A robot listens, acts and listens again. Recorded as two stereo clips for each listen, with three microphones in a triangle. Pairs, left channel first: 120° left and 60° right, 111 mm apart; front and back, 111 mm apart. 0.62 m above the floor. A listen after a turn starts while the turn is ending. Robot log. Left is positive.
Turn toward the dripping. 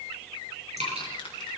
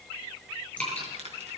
note: The dripping: 75° right.
cmd yaw -75
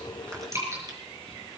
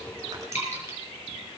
end: Found it: dripping, straight ahead, over 4 m away.